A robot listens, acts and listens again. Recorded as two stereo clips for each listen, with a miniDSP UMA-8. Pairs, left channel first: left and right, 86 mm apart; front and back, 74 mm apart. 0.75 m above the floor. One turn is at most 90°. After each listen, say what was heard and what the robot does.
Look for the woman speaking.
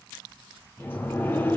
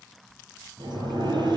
Keep listening.
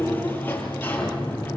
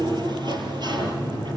Keep listening.
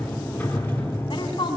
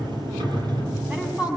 The woman speaking: 105° left. Turn 90° left.
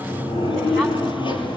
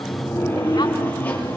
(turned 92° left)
Nothing new. It was at 10° left. Turn 10° left.
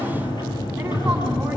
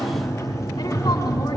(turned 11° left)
Keep listening.
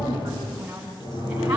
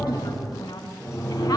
The woman speaking is now 15° right. Turn 15° right.
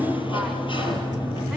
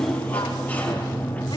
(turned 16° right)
Keep listening.
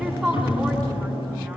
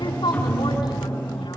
Found it: a woman speaking, straight ahead, over 4 m away.